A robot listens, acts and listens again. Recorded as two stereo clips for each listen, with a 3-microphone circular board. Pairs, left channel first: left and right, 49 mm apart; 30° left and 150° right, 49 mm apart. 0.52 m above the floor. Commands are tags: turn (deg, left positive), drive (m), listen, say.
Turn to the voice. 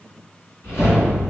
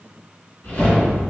<listen/>
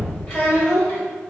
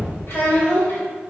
<turn deg="60"/>
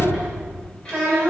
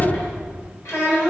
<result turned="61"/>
<turn deg="25"/>
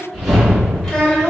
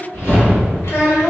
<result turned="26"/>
<turn deg="20"/>
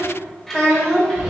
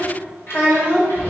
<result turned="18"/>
<turn deg="15"/>
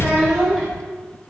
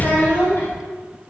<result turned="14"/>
<listen/>
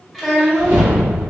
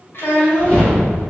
<say>Facing the child speaking.</say>